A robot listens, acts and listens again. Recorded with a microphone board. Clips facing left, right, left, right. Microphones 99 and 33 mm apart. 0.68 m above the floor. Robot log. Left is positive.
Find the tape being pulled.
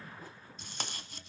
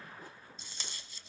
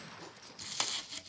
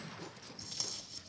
note: The tape being pulled: about 60° left or 120° left.
cmd yaw +60
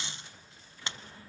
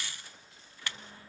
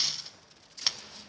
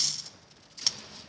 note: So it is at 25° left.
cmd yaw +25
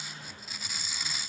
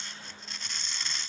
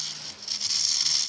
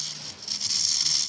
end: Found it: tape being pulled, straight ahead, under 1 m away.